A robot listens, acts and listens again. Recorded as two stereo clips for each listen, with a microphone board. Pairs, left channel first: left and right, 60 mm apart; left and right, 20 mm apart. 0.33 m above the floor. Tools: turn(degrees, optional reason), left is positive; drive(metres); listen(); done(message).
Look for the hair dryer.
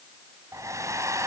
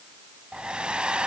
turn(degrees=-65, reason="The hair dryer: about 65° right or 115° right.")
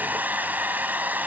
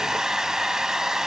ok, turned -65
turn(degrees=-35, reason="So it is at 35° right.")
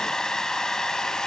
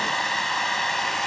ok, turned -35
turn(degrees=10, reason="The hair dryer is now 10° left.")
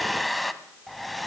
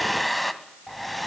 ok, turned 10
done("Facing the hair dryer, 1 to 2 m away.")